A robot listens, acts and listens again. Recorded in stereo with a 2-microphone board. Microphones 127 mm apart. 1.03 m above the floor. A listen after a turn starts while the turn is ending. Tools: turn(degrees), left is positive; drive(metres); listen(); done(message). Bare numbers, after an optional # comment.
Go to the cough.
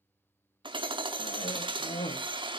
# The cough: about 65° left or 115° left.
turn(65)
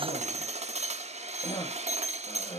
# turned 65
# So it is at 40° left.
turn(40)
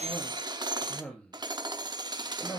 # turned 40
# The cough is now 10° left.
turn(10)
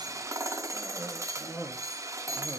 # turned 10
drive(1.0)
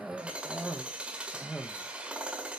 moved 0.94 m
drive(1.0)
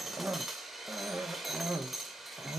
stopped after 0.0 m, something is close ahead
# The cough is now 15° right.
turn(-15)
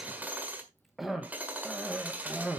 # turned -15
done("I am next to the cough.")